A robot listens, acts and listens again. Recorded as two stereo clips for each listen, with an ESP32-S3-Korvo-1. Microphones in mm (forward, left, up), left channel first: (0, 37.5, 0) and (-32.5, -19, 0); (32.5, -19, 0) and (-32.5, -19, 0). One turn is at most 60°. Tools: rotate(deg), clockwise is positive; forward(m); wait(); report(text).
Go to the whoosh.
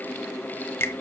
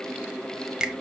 wait()
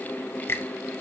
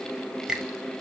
wait()
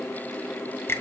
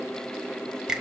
report("I can't make out a whoosh to turn to.")